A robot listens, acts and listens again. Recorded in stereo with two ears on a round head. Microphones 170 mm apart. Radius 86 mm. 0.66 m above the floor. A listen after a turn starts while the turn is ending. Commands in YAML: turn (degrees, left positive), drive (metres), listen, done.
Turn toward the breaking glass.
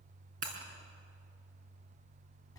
turn: -45
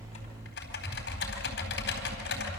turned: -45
listen: true
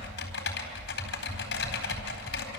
done: "I heard breaking glass, but can't make it out now. It was about straight ahead or 90° right."